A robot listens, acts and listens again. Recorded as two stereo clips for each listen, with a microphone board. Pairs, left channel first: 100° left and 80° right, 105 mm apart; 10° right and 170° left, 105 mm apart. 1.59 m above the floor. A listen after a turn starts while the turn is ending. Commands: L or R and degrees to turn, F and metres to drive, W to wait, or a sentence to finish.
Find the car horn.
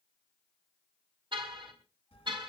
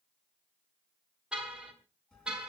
R110
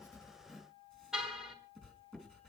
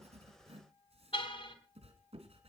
Facing the car horn.